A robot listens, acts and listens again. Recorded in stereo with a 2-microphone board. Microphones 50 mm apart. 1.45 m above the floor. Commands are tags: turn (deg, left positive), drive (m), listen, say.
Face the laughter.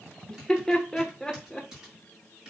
<turn deg="30"/>
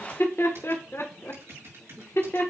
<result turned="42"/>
<turn deg="125"/>
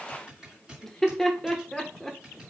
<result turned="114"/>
<turn deg="10"/>
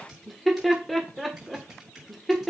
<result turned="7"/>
<say>Found it: laughter, straight ahead.</say>